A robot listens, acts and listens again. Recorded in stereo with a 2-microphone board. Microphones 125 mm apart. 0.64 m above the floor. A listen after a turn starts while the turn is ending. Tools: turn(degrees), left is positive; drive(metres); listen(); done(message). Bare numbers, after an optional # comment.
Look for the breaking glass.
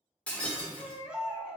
turn(30)
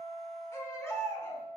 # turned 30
listen()
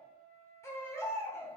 done("I heard breaking glass, but can't make it out now. It was about 20° right or 140° left.")